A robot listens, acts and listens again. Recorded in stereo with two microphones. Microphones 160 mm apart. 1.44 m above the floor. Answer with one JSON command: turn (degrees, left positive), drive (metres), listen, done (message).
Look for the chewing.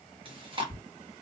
{"turn": -35}
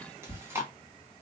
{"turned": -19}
{"turn": -15}
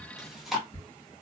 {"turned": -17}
{"done": "Found it: chewing, straight ahead, 1 to 2 m away."}